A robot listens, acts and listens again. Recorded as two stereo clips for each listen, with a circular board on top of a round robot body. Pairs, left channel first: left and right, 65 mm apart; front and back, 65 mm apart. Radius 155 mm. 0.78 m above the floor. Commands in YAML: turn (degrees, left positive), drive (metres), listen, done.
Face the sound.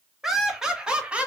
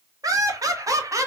turn: -160
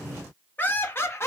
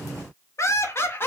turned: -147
turn: 50
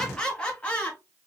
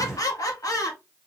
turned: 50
turn: 20
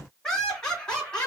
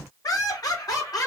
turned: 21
turn: 15
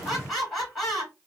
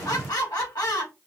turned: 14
done: "Found it: laughter, straight ahead, 2 to 4 m away."